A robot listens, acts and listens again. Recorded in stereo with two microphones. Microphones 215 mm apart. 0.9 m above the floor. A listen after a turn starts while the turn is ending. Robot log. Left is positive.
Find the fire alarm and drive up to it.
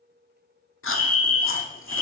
cmd yaw +30
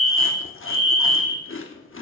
note: So it is at 145° left.
cmd yaw +145
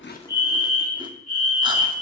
note: The fire alarm is now 45° left.
cmd yaw +45
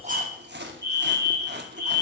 note: The fire alarm is now 15° left.
cmd yaw +15
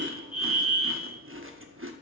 cmd fwd 1.0
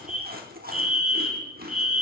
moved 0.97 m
cmd fwd 1.0
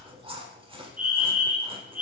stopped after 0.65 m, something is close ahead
note: The fire alarm is now 10° right.
cmd yaw -10
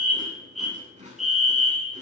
end: I am next to the fire alarm.